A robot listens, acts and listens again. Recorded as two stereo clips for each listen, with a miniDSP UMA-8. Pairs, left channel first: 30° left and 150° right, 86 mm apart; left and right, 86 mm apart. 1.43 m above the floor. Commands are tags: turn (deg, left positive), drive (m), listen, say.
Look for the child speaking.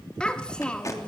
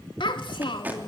<turn deg="110"/>
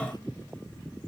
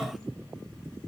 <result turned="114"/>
<listen/>
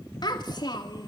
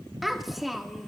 <say>Facing the child speaking, 2 to 4 m away.</say>